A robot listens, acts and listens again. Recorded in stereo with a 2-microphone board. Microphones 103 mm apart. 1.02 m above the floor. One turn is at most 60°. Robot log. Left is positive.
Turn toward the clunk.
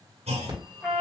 cmd yaw -60
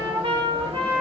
note: Nothing new. It was at 30° right.
cmd yaw -30
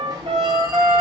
end: Facing where the clunk came from. I can't hear it now.